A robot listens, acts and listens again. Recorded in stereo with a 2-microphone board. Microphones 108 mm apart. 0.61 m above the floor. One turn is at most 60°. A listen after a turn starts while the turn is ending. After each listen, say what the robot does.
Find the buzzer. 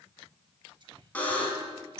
Turn 30° left.
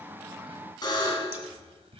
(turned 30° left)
Turn 60° left.
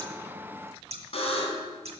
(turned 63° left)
Turn 60° left.
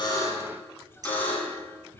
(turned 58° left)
Turn 15° left.
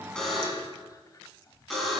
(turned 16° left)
Found it: a buzzer, straight ahead.